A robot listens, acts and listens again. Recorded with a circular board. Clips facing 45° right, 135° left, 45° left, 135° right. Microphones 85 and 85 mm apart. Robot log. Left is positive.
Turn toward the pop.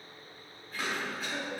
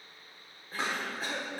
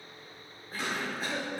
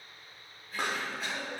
note: The pop: 165° right.
cmd yaw -165
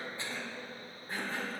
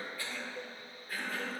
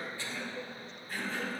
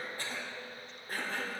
end: I heard a pop from this way, but can't make it out now.